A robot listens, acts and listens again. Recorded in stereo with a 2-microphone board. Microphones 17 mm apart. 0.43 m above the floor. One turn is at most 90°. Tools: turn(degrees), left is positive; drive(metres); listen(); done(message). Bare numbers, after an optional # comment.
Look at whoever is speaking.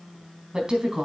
# The woman speaking: about 50° right or 130° right.
turn(-50)
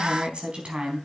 # So it is at 80° right.
turn(-80)
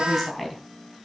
done("Found it: a woman speaking, straight ahead, 2 to 4 m away.")